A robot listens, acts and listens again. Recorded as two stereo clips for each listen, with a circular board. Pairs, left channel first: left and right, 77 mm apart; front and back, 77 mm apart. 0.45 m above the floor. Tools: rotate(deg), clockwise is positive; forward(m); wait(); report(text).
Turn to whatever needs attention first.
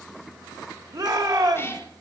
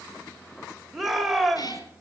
rotate(90)
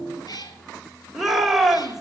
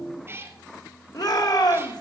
report("Found it: a shout, straight ahead.")